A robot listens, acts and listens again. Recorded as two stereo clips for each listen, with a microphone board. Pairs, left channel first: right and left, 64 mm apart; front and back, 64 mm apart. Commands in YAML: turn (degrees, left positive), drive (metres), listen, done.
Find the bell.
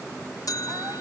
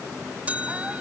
turn: -110
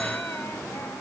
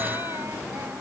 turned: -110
listen: true
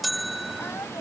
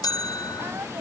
done: "Facing the bell."